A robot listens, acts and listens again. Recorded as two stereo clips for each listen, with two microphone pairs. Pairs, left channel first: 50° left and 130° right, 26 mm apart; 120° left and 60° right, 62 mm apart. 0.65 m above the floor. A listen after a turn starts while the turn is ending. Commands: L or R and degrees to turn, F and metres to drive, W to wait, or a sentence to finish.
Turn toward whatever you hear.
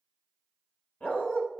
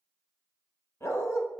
L75
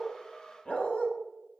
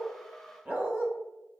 Found it: a dog barking, straight ahead, 1 to 2 m away.